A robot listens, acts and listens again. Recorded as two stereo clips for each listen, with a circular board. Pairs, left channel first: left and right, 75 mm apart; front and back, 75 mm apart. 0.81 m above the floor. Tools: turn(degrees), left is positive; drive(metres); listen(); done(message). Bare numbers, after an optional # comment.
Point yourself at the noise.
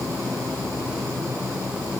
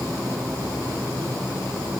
listen()
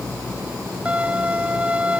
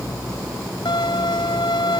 # The violin: 15° right.
turn(-15)
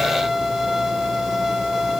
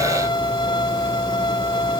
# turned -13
done("Facing the violin.")